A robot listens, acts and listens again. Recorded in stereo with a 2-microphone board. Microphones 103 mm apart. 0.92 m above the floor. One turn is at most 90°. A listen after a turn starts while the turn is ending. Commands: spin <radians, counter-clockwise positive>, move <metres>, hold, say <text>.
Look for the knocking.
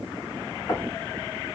spin 0.70
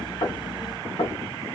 spin 1.57
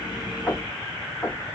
spin 0.26
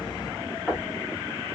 say Facing the knocking.